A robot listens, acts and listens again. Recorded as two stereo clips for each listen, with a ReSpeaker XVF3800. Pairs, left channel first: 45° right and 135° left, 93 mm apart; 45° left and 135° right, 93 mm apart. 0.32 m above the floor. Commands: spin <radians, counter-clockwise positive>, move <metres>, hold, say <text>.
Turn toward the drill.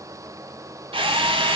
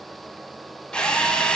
spin 2.18
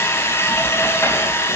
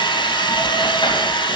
spin 0.26
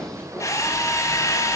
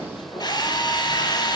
say Found it: a drill, straight ahead.